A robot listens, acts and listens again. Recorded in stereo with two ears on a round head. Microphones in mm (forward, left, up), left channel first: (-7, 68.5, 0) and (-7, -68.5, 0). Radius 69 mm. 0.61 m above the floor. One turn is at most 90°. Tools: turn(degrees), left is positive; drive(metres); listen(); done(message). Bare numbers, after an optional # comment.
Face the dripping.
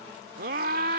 listen()
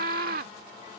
listen()
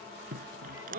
# The dripping: about 55° right or 125° right.
turn(-55)
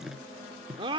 done("Found it: dripping, straight ahead.")